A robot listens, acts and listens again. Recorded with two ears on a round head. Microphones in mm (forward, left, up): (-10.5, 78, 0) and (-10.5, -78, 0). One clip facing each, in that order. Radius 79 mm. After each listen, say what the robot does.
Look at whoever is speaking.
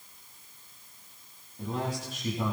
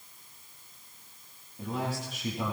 Turn 30° right.
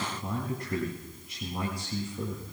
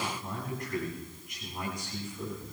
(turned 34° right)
Turn 25° left.
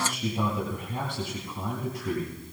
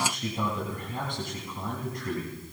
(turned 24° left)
Facing the man speaking.